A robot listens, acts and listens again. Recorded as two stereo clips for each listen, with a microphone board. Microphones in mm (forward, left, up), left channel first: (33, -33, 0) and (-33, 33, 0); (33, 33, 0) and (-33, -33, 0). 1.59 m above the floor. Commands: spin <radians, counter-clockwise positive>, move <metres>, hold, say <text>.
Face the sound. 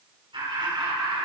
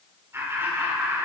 spin 2.79
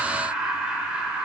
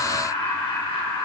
spin 0.96
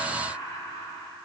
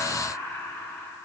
spin -0.35
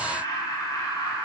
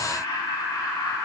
say Found it: laughter, straight ahead, over 4 m away.